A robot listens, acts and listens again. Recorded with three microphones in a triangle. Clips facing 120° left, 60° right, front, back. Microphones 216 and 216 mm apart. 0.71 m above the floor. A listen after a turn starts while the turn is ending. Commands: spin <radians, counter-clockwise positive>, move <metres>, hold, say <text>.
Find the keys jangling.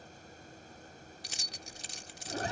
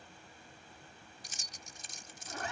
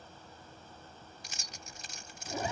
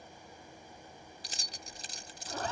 spin 2.18
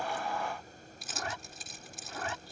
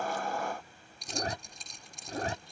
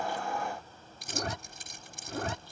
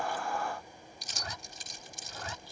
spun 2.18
spin 0.61
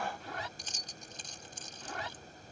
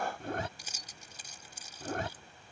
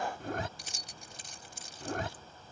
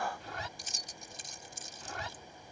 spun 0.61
spin 0.35
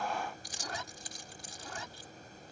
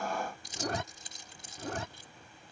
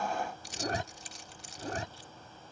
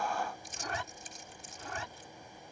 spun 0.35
say Found it: keys jangling, straight ahead.